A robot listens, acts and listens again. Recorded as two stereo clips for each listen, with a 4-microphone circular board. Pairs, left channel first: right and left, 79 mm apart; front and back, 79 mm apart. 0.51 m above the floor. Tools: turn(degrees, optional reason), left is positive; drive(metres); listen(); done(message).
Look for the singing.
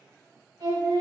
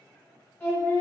turn(degrees=75, reason="The singing: 75° left.")
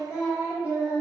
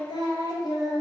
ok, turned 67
turn(degrees=20, reason="The singing is now 20° left.")
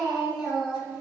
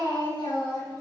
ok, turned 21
turn(degrees=15, reason="The singing is now 15° left.")
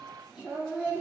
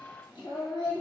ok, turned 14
turn(degrees=15, reason="The singing is now 15° left.")
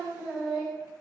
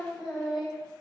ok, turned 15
turn(degrees=10, reason="The singing is now 10° left.")
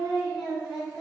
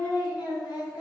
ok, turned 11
done("Facing the singing, 1 to 2 m away.")